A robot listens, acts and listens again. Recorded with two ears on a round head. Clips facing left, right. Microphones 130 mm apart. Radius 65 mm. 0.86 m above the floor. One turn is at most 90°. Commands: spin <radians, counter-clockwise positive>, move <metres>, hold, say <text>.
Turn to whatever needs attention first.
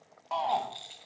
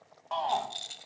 spin 0.52
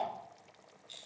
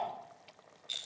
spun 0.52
spin 1.57
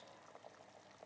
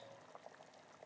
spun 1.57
spin 0.87
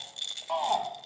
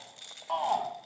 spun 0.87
say Facing the shout, 1 to 2 m away.